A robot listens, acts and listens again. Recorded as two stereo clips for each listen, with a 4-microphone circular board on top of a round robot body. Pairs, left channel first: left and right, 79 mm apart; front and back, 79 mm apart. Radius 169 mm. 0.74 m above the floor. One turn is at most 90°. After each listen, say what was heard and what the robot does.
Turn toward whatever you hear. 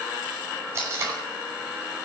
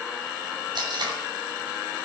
The tape being pulled: 150° right. Turn 90° right.
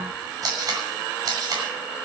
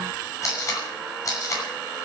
The tape being pulled is now 50° right. Turn 50° right.
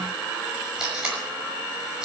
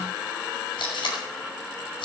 The tape being pulled is now 10° right. Turn 10° right.
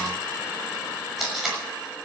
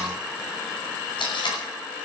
Facing the tape being pulled, over 4 m away.